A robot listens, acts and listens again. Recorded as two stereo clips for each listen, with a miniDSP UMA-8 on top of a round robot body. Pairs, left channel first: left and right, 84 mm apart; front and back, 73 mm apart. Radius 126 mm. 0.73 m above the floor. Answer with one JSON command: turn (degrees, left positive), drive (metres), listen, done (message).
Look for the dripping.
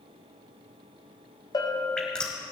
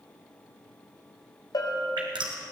{"turn": 170}
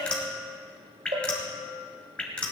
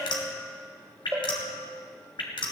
{"turn": 10}
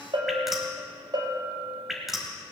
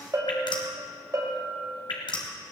{"done": "Facing the dripping."}